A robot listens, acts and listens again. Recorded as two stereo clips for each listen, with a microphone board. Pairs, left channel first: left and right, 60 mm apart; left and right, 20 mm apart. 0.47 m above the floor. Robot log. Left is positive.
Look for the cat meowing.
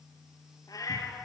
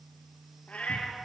note: The cat meowing: about 75° left or 105° left.
cmd yaw +75
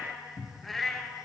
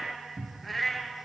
end: Found it: a cat meowing, straight ahead.